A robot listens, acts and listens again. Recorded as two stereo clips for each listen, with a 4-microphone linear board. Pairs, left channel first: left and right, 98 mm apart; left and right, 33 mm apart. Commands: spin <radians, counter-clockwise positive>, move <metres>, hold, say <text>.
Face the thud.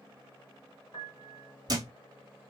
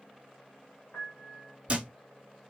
spin -0.79
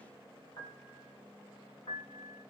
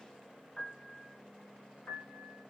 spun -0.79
hold
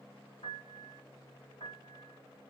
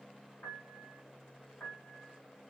say I heard a thud, but can't make it out now. It was about straight ahead or 90° right.